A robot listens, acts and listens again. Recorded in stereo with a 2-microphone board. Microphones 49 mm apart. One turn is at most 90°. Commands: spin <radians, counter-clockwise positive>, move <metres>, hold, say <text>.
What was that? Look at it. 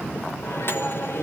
spin 0.96
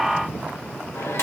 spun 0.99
spin 1.22
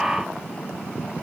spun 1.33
hold
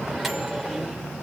say Facing the microwave.